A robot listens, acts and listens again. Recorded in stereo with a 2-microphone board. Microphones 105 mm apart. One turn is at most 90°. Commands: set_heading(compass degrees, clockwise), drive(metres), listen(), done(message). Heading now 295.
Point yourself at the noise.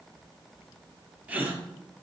set_heading(310)
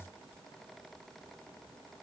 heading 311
listen()
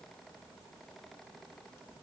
done("I heard a gasp, but can't make it out now. It was about straight ahead or 150° right.")